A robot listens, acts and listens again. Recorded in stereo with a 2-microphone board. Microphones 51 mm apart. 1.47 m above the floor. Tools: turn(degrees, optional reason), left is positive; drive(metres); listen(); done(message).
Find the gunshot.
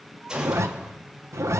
turn(degrees=-20, reason="The gunshot: about 20° right or 160° right.")
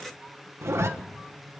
listen()
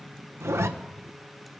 done("I heard a gunshot, but can't make it out now. It was about straight ahead or 140° right.")